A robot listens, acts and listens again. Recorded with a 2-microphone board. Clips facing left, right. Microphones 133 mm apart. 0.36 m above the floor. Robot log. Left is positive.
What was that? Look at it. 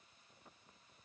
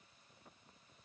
cmd idle
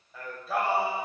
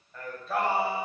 cmd yaw +30
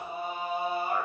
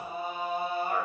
cmd yaw +30
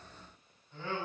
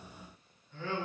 note: So it is at 160° left.
cmd yaw +160
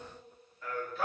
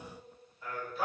note: The singing is now 10° right.
cmd yaw -10
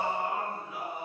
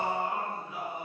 end: Facing the singing.